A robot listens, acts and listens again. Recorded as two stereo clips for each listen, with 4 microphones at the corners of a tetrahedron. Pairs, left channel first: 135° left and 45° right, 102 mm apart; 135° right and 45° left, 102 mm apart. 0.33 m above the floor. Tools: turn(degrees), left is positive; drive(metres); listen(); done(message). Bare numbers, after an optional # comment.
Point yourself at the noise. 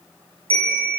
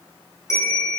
# The bell: 75° right.
turn(-75)
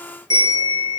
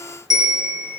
done("Found it: a bell, straight ahead, 2 to 4 m away.")